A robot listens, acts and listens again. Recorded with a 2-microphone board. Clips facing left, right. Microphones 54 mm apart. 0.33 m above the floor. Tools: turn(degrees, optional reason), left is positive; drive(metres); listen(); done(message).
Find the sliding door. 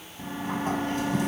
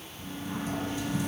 turn(degrees=70, reason="The sliding door: about 70° left or 110° left.")
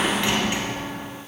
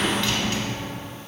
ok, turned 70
turn(degrees=25, reason="So it is at 25° left.")
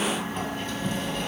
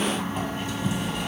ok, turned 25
turn(degrees=-10, reason="The sliding door is now 10° right.")
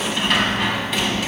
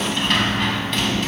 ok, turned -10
done("Facing the sliding door.")